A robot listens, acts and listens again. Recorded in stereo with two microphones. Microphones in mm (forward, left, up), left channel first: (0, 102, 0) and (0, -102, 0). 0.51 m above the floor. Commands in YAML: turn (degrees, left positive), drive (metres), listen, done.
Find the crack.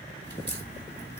turn: 50
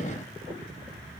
listen: true
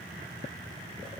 done: "I heard a crack, but can't make it out now. It was about straight ahead or 80° left."